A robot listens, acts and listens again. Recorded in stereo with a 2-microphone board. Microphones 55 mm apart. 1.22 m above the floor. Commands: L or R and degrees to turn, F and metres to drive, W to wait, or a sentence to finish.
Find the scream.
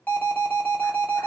W
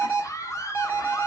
L65
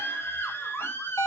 L45
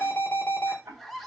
Facing the scream.